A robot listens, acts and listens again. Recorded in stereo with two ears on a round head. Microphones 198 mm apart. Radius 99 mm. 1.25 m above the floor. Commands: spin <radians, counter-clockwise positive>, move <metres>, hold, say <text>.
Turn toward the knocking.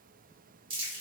hold
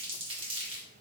hold
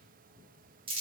say I can't make out knocking to turn to.